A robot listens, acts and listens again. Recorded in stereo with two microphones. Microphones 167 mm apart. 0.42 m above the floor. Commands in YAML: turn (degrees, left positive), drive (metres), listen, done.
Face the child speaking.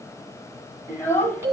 turn: 30
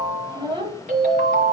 turn: -30
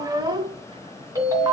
turn: -25
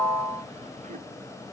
listen: true
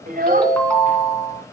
turn: -55
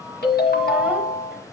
listen: true
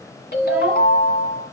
listen: true
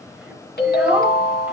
done: "Facing where the child speaking came from. I can't hear it now."